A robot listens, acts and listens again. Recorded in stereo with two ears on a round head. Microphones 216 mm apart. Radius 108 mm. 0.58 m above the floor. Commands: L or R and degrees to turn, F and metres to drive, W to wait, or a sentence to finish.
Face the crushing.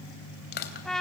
L45
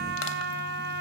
W
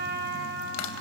L90
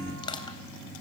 L20
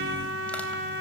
W
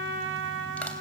W
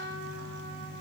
I heard crushing from this way, but can't make it out now.